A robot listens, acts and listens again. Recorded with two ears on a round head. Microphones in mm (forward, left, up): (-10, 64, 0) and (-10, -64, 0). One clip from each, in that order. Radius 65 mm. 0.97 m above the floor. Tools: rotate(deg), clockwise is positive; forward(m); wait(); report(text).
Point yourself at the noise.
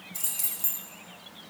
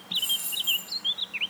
rotate(-65)
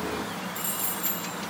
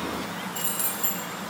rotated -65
report("Found it: keys jangling, straight ahead, over 4 m away.")